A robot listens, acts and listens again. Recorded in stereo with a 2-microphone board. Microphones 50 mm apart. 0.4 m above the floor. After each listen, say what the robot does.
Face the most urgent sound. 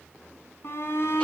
Turn 50° left.
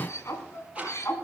Turn 70° left.
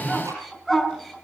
Facing the shout, over 4 m away.